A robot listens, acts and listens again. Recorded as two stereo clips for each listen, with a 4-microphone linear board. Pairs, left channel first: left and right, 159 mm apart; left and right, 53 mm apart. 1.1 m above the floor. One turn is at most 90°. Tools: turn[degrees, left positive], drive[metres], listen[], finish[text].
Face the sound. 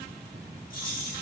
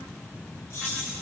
Thought: The keys jangling: about 60° left or 120° left.
Action: turn[60]
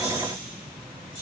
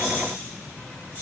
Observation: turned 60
Thought: So it is at 30° left.
Action: turn[30]
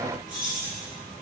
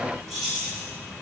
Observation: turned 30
Thought: The keys jangling is now 10° right.
Action: turn[-10]
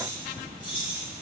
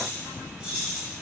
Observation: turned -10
Thought: The keys jangling is now 10° right.
Action: turn[-10]
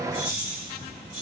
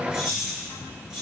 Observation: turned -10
Action: finish[Found it: keys jangling, straight ahead, 2 to 4 m away.]